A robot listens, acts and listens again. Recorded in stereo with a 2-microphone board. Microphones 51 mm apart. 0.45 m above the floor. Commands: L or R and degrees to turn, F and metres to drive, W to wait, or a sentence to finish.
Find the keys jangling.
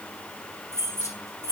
R75
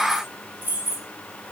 R40
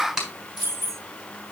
R50
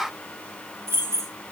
R65
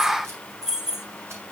R10
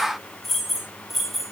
Facing the keys jangling, 1 to 2 m away.